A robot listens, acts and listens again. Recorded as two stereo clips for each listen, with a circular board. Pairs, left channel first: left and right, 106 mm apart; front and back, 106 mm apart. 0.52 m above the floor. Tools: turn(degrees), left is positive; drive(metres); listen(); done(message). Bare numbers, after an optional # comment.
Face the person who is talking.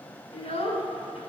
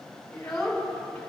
# The child speaking: 85° left.
turn(85)
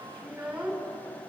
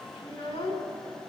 # The child speaking is now 15° right.
turn(-15)
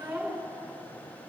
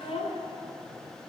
done("Facing the child speaking, 2 to 4 m away.")